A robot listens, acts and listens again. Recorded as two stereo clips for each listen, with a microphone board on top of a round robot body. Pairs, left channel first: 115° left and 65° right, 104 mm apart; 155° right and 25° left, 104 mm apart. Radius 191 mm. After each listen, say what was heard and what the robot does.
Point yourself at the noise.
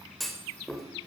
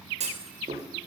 The clunk: 25° left. Turn 25° left.
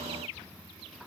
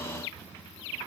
I heard a clunk from this way, but can't make it out now.